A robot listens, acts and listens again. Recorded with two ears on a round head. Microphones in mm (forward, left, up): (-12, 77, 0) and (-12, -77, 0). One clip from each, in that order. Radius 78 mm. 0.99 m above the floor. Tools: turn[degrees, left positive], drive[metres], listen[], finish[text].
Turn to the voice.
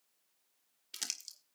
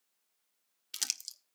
Action: listen[]
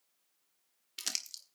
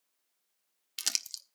Action: listen[]
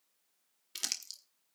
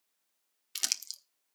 Action: finish[I can't make out anyone speaking to turn to.]